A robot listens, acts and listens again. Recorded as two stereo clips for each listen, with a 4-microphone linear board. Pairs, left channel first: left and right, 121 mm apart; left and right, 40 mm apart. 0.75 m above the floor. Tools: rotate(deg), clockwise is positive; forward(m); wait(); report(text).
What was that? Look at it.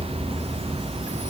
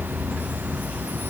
wait()
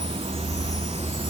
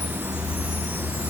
wait()
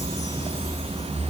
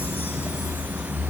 report("I can't make out anything.")